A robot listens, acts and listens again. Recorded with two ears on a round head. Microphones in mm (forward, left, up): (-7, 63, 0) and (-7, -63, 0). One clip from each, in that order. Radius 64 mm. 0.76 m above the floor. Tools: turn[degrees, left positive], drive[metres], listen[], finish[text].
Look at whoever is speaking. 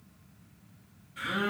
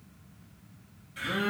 Action: listen[]
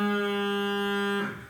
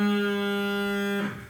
Action: listen[]
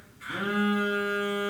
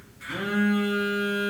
Action: finish[I can't make out anyone speaking, only a phone buzzing.]